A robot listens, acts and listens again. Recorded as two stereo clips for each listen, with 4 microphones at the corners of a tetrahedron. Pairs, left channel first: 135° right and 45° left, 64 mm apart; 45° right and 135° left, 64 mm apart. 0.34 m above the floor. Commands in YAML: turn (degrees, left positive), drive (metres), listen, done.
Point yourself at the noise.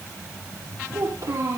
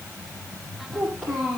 turn: 45
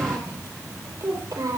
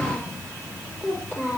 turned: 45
turn: 15
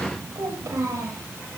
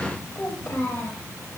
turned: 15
done: "Facing the child speaking, over 4 m away."